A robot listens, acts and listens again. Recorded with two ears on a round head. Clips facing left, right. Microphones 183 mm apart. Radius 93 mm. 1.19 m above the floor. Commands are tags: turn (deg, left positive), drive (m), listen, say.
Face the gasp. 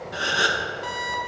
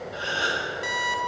<turn deg="65"/>
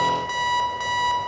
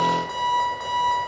<listen/>
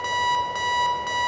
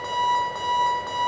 <say>I heard a gasp, but can't make it out now. It was about straight ahead or 50° left.</say>